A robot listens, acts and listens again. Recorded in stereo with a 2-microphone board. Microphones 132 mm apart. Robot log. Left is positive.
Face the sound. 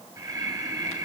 note: The breathing: about 25° right or 155° right.
cmd yaw -25
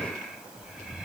end: Facing the breathing, 2 to 4 m away.